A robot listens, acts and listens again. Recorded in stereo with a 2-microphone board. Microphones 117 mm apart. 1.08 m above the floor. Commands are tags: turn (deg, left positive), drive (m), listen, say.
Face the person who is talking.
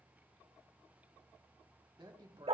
<turn deg="-40"/>
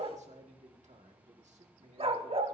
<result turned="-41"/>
<turn deg="-100"/>
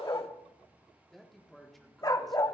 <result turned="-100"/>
<say>Found it: a man speaking, straight ahead.</say>